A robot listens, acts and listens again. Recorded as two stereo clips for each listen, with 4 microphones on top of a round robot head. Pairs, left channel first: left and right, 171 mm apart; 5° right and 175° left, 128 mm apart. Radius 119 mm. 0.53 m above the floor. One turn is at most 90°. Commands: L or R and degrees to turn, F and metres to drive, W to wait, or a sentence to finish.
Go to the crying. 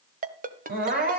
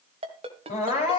R50
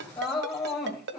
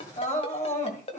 L15
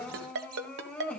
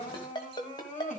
F1.0
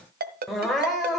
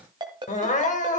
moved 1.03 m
F1.0
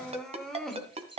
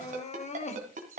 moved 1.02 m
F1.0
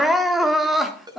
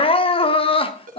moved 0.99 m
F1.0
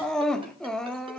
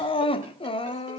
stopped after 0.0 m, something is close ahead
Arrived at the crying, straight ahead.